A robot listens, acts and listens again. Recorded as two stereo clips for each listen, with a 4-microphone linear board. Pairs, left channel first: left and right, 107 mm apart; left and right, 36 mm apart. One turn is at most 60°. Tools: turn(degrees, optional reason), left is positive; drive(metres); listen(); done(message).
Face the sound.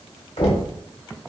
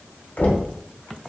turn(degrees=60, reason="The knocking: about 65° left or 115° left.")
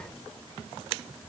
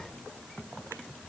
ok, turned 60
listen()
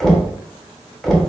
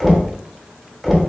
done("Facing the knocking.")